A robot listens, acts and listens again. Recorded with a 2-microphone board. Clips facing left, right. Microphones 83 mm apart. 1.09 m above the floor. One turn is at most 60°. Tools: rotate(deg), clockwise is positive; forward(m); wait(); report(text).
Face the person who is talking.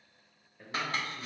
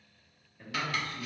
rotate(-30)
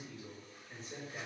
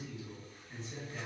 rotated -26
rotate(-60)
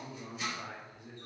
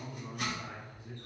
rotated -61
rotate(-60)
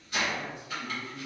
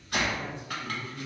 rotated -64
rotate(-10)
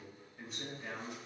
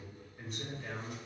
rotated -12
report("Found it: a man speaking, straight ahead, 1 to 2 m away.")